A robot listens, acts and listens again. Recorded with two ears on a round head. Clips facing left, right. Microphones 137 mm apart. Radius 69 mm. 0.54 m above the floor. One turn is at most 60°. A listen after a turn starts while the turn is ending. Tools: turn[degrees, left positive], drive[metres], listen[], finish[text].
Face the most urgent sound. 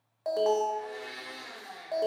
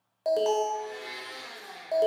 Thought: The alarm: about 30° right or 150° right.
Action: turn[-30]
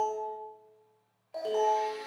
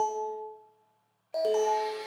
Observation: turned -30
Thought: So it is at 120° right.
Action: turn[-60]
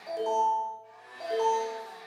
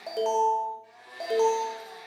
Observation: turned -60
Thought: The alarm is now 65° right.
Action: turn[-60]
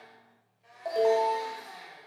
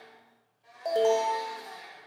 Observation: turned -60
Thought: The alarm is now 25° right.
Action: turn[-25]
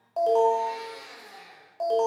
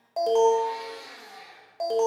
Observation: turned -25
Thought: The alarm is now 10° right.
Action: turn[-10]
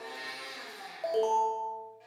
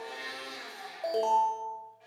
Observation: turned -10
Action: finish[Found it: an alarm, straight ahead.]